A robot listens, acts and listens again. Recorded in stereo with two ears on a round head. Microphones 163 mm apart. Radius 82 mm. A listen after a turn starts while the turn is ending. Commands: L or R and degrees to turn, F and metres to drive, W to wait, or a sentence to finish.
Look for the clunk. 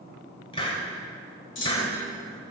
L70
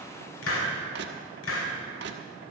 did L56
W
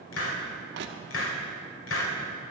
I heard a clunk, but can't make it out now. It was about 15° left or 55° left.